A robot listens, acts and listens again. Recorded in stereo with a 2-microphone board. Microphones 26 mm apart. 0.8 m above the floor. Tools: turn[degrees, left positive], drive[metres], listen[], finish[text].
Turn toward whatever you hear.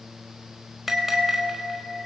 Action: turn[-30]
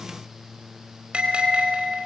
Thought: So it is at 140° right.
Action: turn[-140]
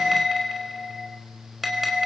Action: finish[Found it: a bell, straight ahead.]